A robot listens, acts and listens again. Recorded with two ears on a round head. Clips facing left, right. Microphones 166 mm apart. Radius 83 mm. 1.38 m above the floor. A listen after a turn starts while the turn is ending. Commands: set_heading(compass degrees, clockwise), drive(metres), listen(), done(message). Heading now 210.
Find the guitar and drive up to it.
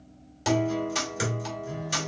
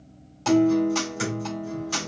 set_heading(180)
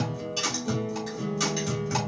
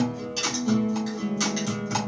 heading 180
set_heading(195)
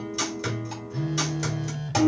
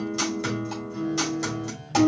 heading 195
drive(1.0)
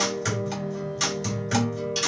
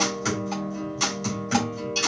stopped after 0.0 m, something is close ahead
done("Blocked. The guitar is further on, straight ahead.")